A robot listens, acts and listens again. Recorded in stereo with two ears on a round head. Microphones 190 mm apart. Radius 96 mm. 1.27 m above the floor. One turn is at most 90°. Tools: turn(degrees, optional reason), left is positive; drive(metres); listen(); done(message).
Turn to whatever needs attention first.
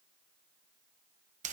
listen()
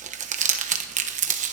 listen()
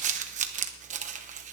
done("I can't make out anything urgent to turn to.")